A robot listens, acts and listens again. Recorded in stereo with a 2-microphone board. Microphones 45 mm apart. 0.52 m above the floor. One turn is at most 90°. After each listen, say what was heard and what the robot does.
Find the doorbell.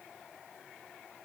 Keep listening.
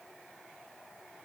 Keep listening.
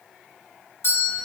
The doorbell: about 55° left or 125° left. Turn 55° left.
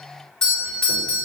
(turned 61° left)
So it is at 20° left. Turn 20° left.
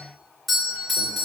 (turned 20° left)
Found it: a doorbell, straight ahead.